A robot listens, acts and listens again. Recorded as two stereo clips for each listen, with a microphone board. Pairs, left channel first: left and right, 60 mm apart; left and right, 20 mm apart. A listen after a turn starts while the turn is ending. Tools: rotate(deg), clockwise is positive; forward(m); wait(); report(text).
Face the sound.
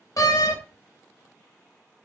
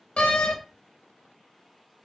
rotate(-65)
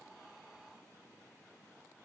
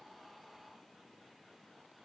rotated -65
wait()
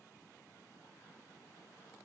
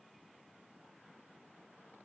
report("I heard a door slam, but can't make it out now. It was about straight ahead or 50° left.")